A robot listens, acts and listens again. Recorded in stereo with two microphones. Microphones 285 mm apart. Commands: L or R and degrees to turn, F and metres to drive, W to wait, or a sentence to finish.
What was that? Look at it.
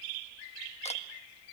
W
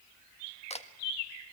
L20
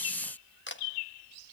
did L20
L140
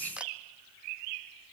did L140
Found it: a camera shutter, straight ahead.